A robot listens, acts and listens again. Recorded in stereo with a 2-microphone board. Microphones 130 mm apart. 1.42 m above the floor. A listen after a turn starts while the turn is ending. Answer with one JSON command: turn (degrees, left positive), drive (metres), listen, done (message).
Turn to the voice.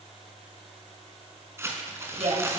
{"turn": -50}
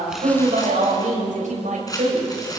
{"turn": -75}
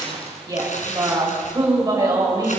{"turn": -30}
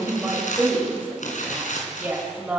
{"turn": -15}
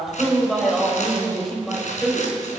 {"done": "Found it: a woman speaking, straight ahead, over 4 m away."}